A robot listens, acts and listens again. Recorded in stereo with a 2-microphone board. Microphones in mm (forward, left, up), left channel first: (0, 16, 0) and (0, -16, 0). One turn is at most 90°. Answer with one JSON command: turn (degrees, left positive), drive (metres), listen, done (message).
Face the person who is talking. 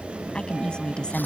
{"turn": 30}
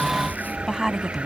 {"done": "Facing the woman speaking."}